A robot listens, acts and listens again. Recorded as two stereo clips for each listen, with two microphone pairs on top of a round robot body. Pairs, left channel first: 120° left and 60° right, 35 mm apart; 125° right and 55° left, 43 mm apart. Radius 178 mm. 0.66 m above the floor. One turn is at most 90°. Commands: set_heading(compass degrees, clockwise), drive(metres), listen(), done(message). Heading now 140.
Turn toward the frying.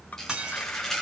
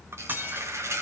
set_heading(100)
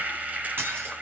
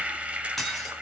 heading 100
set_heading(110)
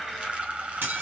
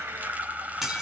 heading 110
done("Facing the frying, 2 to 4 m away.")